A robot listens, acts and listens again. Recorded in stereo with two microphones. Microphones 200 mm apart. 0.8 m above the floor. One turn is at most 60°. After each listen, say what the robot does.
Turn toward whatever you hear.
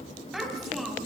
Turn 30° left.
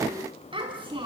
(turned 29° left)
Turn 25° right.
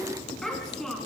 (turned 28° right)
Facing the child speaking, over 4 m away.